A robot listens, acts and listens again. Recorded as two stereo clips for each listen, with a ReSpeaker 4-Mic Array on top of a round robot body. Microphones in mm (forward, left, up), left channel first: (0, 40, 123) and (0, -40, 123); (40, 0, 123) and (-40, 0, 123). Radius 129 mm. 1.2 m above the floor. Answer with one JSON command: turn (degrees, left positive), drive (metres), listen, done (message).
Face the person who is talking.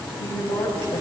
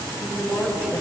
{"turn": 80}
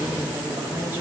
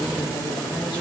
{"listen": true}
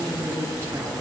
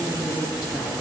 {"turn": -30}
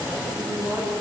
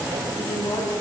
{"turn": -10}
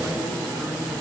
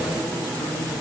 {"listen": true}
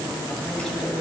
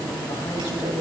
{"listen": true}
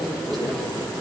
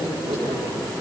{"done": "I heard a woman speaking from this way, but can't make it out now."}